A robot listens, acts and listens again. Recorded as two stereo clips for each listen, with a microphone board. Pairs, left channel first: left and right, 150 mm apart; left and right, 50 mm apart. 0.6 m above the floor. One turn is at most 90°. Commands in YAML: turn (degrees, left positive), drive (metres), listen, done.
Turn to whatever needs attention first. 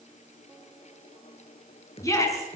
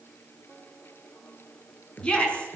turn: 20
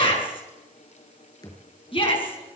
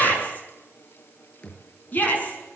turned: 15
turn: 90
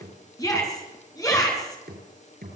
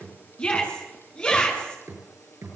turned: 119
turn: 25
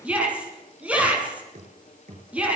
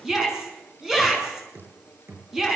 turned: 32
turn: -10
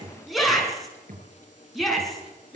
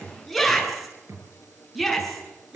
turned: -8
done: "Found it: a shout, straight ahead, over 4 m away."